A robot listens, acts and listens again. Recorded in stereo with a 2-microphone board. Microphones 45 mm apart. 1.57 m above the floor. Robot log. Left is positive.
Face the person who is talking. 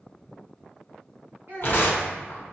note: The child speaking: about 60° right or 120° right.
cmd yaw -60
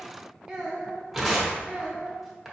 note: So it is at 10° right.
cmd yaw -10
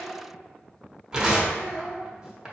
end: Found it: a child speaking, straight ahead, 1 to 2 m away.